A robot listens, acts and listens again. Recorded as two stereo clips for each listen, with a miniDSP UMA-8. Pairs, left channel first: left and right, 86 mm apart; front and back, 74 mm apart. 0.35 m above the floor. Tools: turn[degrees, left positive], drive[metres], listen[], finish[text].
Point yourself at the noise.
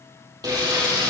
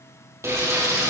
Thought: The frying: 130° right.
Action: turn[-130]
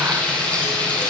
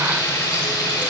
Thought: The frying is now 15° left.
Action: turn[15]
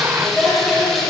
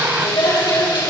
Action: finish[Found it: frying, straight ahead.]